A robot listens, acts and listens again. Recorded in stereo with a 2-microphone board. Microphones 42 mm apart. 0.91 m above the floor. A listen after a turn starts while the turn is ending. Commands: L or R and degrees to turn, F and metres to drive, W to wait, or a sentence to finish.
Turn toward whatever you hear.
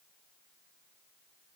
W
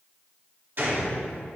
R50
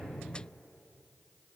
W
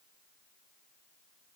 I heard a gunshot, but can't make it out now. It was about straight ahead or 80° right.